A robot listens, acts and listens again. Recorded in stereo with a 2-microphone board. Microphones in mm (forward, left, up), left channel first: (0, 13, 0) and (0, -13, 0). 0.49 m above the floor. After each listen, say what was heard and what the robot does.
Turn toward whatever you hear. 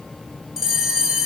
Turn 30° right.
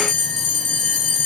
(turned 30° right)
So it is at 25° left. Turn 25° left.
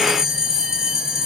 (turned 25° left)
The bell is now 15° right. Turn 15° right.
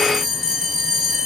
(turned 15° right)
Facing the bell.